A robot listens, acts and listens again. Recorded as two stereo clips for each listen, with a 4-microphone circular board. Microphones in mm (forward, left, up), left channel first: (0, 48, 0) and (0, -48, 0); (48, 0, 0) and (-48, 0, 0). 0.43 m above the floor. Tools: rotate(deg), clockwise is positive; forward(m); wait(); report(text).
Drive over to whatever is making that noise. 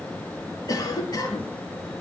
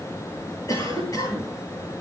rotate(-50)
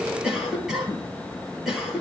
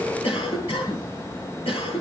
forward(1.0)
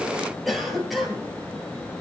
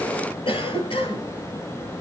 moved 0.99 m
forward(1.0)
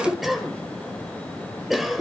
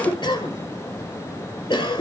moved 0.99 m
forward(1.0)
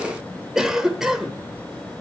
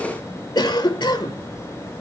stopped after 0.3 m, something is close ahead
report("Arrived at the cough, straight ahead.")